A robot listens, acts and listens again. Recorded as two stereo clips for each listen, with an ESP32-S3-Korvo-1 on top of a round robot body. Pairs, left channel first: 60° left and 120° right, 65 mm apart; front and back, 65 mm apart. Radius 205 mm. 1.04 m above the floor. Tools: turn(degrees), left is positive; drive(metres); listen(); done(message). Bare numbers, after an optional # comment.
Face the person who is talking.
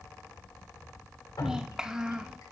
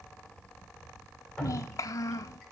# The child speaking: 40° right.
turn(-40)
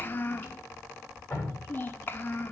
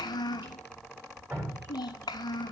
done("Found it: a child speaking, straight ahead.")